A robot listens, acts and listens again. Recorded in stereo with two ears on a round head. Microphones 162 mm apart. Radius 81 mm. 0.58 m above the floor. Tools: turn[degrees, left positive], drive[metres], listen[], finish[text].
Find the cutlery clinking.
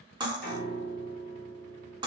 Thought: The cutlery clinking: about 25° right or 155° right.
Action: turn[-25]
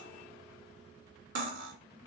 Thought: So it is at 125° right.
Action: turn[-125]
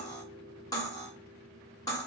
Thought: The cutlery clinking is now 20° left.
Action: turn[20]
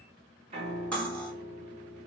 Thought: The cutlery clinking is now 10° left.
Action: turn[10]
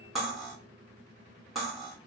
Action: finish[Found it: cutlery clinking, straight ahead, under 1 m away.]